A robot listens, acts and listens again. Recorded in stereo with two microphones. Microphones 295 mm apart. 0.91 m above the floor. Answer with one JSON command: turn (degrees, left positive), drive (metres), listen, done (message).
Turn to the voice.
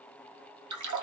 {"listen": true}
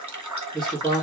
{"turn": 30}
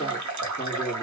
{"turn": 150}
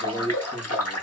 {"turn": 20}
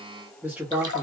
{"done": "Found it: a man speaking, straight ahead."}